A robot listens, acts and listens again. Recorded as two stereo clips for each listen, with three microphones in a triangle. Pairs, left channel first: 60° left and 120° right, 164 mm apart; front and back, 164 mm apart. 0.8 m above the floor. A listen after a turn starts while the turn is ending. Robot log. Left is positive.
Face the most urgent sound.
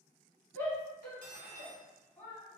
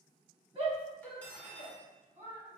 note: The shout: 130° left.
cmd yaw +130
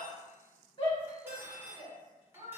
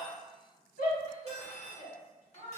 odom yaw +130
end: Facing the shout.